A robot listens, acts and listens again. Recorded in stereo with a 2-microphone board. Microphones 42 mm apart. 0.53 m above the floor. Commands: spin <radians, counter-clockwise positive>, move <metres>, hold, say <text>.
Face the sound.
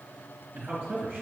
spin -0.79
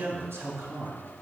spin -1.57
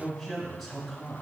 say Found it: a man speaking, straight ahead, 2 to 4 m away.